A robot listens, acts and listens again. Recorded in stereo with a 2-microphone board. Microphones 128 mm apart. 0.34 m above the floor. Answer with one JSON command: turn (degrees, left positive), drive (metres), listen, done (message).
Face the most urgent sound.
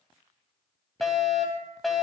{"turn": 30}
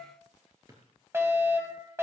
{"turn": -25}
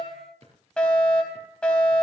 {"turn": 10}
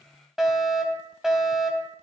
{"done": "Facing the fire alarm."}